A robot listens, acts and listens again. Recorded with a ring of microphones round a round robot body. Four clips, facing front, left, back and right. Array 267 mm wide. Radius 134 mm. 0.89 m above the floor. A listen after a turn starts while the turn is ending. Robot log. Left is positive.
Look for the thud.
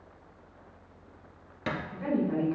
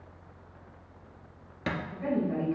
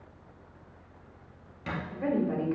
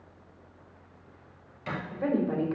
note: The thud: 60° left.
cmd yaw +60
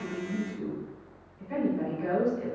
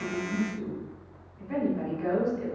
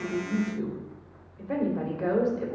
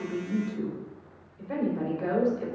end: I heard a thud from this way, but can't make it out now.